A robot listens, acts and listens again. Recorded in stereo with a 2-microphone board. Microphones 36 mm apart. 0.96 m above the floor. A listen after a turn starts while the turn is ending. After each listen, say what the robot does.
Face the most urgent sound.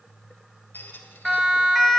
Turn 30° left.
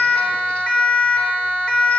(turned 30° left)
Turn 155° left.
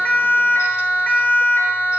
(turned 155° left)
Turn 60° left.
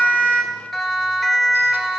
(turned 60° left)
Turn 10° left.
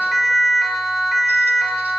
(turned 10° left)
Facing the siren, 2 to 4 m away.